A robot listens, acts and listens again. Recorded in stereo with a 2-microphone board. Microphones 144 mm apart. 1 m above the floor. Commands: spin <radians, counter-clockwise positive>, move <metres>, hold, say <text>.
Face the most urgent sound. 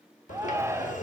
spin -0.35
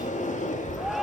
say Facing the shout, under 1 m away.